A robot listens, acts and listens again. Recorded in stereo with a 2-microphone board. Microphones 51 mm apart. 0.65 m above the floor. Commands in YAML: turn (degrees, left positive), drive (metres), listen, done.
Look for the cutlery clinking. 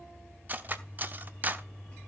turn: -35
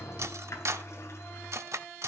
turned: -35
turn: -105
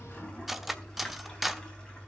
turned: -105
done: "Facing the cutlery clinking."